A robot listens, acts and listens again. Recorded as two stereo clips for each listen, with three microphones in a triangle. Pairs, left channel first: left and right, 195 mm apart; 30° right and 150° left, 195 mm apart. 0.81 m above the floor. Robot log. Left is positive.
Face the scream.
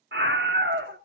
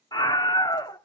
note: The scream: 100° right.
cmd yaw -100
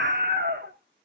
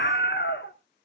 note: The scream is now 60° right.
cmd yaw -60
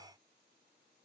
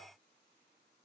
cmd idle
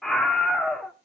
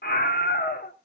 end: Facing the scream.